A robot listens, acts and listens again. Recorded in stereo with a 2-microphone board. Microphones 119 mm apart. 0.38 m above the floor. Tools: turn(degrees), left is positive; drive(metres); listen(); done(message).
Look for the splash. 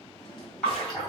turn(degrees=30)
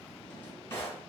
listen()
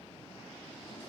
done("I heard a splash, but can't make it out now. It was about 25° right or 145° left.")